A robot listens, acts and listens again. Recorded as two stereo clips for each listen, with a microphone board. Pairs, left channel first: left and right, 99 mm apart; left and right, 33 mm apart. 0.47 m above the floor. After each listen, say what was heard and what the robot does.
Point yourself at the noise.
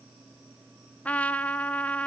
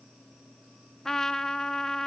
Turn 30° left.
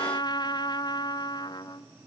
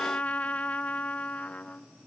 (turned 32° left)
So it is at 135° left. Turn 135° left.
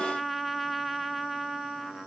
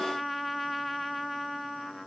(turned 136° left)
Facing the trumpet, under 1 m away.